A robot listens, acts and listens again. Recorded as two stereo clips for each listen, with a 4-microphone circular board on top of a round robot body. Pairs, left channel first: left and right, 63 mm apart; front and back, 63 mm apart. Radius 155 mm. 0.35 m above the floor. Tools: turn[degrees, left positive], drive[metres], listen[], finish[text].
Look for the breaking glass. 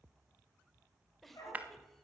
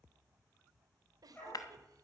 Thought: The breaking glass: 25° right.
Action: turn[-25]
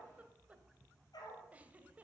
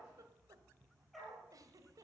Action: finish[Facing where the breaking glass came from. I can't hear it now.]